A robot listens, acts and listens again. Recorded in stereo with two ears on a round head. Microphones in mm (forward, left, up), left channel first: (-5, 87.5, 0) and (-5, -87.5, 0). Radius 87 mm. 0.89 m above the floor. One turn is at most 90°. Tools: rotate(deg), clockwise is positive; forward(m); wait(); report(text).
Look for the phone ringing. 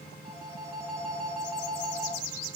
rotate(-30)
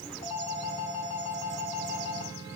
rotate(-90)
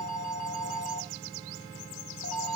rotate(-80)
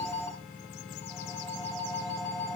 rotate(-15)
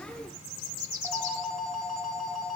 report("Found it: a phone ringing, straight ahead.")